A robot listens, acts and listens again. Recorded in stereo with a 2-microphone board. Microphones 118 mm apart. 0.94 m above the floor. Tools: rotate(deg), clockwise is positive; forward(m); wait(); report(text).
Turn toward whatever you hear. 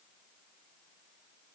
wait()
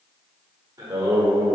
rotate(30)
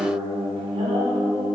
rotate(120)
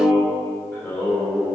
rotate(-20)
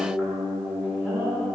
rotate(10)
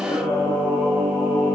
report("Facing the singing.")